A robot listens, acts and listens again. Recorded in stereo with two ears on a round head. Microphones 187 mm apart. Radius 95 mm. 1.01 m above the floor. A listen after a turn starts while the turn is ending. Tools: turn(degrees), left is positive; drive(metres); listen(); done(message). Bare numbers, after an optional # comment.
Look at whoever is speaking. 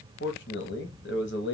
# The man speaking: about 55° left or 125° left.
turn(55)
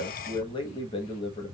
# So it is at 30° left.
turn(30)
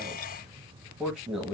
done("Facing the man speaking.")